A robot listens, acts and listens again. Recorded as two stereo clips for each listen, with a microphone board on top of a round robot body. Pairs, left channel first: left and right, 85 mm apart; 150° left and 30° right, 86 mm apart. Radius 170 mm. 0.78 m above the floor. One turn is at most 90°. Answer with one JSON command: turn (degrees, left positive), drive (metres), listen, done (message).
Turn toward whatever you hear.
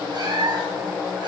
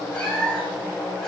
{"turn": -90}
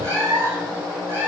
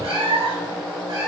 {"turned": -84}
{"turn": -30}
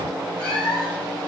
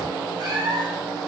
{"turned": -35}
{"turn": 10}
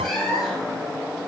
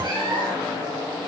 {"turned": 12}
{"done": "Found it: a cat meowing, straight ahead."}